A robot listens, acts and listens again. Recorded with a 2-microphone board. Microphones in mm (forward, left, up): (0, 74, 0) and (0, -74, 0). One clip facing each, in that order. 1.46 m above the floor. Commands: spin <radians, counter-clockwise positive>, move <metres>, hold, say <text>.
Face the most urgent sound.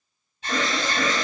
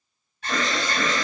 spin 0.35
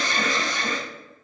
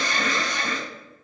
spin 2.36
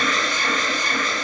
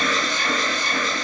say Facing the alarm, 1 to 2 m away.